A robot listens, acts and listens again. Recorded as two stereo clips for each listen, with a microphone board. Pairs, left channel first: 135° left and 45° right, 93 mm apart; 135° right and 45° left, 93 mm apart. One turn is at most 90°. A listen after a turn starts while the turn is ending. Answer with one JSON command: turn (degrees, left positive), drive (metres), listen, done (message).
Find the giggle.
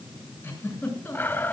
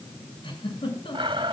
{"turn": -90}
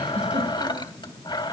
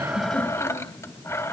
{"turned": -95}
{"turn": -65}
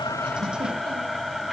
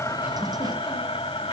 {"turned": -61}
{"listen": true}
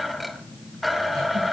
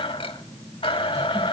{"done": "I heard a giggle from this way, but can't make it out now."}